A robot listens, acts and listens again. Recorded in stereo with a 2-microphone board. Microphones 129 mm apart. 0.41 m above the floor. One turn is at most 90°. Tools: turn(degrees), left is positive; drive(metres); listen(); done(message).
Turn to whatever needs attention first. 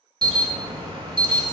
turn(degrees=-40)
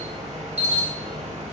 turn(degrees=-90)
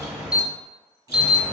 turn(degrees=-10)
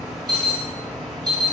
done("Found it: an alarm, straight ahead.")